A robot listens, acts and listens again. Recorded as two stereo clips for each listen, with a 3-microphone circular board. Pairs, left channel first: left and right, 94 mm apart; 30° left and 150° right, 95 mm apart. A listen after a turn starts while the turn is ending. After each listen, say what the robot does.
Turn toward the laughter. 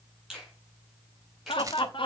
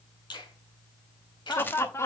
Turn 85° left.
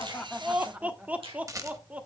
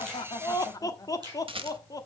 Turn 15° right.
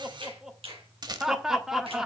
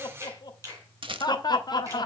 Found it: laughter, straight ahead.